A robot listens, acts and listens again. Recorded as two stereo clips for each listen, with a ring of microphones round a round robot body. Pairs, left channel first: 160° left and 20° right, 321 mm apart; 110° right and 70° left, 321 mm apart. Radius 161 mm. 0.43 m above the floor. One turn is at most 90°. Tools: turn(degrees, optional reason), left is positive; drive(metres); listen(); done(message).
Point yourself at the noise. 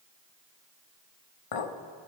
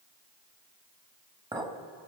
turn(degrees=90, reason="The clink: 145° left.")
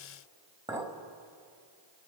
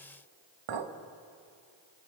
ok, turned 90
turn(degrees=55, reason="The clink is now 55° left.")
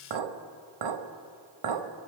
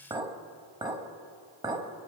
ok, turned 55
turn(degrees=-10, reason="The clink is now 10° right.")
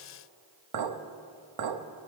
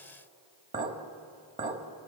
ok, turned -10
done("Facing the clink, 1 to 2 m away.")